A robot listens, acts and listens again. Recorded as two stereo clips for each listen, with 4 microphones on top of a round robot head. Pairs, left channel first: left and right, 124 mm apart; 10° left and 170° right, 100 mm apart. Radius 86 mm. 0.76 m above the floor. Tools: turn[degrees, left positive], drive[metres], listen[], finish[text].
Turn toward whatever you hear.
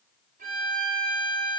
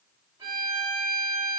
Thought: The violin: 115° right.
Action: turn[-115]
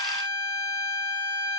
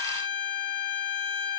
Thought: The violin is now 10° left.
Action: turn[10]
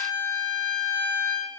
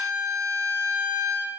Action: finish[Found it: a violin, straight ahead, 2 to 4 m away.]